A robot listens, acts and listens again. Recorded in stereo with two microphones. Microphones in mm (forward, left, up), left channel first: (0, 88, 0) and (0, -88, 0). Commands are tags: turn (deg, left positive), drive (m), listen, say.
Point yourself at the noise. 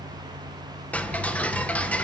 <turn deg="30"/>
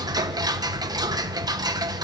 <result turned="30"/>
<turn deg="-20"/>
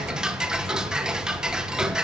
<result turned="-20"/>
<say>Facing the ticking.</say>